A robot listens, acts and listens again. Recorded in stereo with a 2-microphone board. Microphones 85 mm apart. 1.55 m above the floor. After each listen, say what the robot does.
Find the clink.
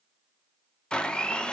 Keep listening.
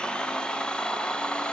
Keep listening.
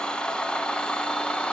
I can't make out a clink to turn to.